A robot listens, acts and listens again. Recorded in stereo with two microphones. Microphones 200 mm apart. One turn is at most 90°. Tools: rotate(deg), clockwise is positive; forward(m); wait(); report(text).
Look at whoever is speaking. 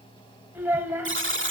rotate(30)
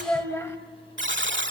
rotate(-15)
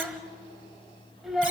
report("Found it: a child speaking, straight ahead, 1 to 2 m away.")